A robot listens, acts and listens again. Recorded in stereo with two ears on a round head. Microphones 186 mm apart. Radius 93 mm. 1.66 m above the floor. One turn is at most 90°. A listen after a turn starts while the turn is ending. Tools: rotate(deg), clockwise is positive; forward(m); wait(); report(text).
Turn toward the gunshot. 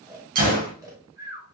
rotate(45)
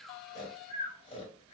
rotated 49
wait()
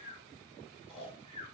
report("I heard a gunshot, but can't make it out now. It was about 5° left or 90° right.")